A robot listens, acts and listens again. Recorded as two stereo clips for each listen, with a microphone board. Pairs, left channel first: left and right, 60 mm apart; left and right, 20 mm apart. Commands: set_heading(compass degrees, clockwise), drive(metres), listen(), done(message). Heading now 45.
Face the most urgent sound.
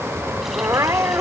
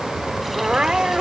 set_heading(105)
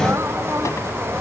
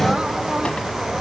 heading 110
listen()
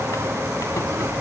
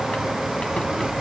listen()
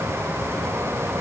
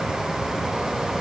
done("I heard crying, but can't make it out now. It was about 5° left or 55° right.")